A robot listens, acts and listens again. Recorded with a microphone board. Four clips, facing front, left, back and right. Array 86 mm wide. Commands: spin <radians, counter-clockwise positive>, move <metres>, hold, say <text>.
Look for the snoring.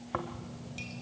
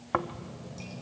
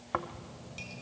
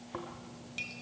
spin 1.75
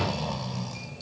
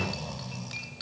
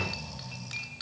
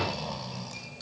spin -0.35
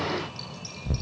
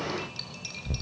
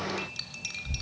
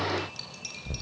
say Facing the snoring, under 1 m away.